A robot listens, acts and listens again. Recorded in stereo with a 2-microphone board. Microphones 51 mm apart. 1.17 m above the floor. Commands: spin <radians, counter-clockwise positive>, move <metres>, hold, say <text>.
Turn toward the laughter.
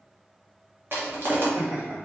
spin -1.57
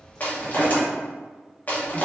hold
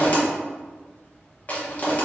hold
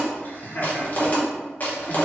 spin 0.70
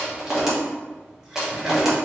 spin -0.17
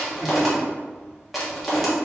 hold
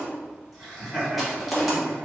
say Found it: laughter, straight ahead.